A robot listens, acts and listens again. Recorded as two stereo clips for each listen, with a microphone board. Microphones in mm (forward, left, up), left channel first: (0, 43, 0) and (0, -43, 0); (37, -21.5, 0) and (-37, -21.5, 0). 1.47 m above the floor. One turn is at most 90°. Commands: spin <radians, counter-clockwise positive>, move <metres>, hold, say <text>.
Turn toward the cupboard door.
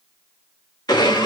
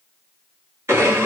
hold
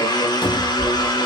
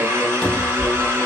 spin 1.40
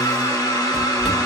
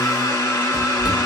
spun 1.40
say Facing the cupboard door.